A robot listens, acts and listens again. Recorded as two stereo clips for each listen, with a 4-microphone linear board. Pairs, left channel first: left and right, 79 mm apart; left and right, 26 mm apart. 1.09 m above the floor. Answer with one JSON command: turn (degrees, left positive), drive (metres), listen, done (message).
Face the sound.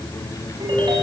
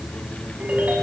{"turn": -90}
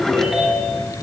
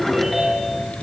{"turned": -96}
{"done": "Facing the ringtone, over 4 m away."}